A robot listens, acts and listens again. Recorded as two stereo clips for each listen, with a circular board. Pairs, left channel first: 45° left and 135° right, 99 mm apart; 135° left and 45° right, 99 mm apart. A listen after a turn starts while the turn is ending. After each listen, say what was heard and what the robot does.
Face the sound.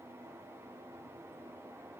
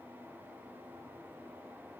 Keep listening.
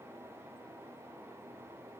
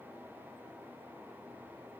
Keep listening.
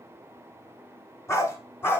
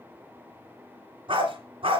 The dog barking: 20° right. Turn 20° right.
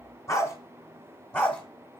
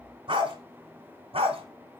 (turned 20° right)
The dog barking is now 30° right. Turn 30° right.
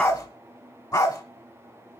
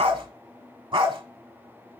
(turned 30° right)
Facing the dog barking.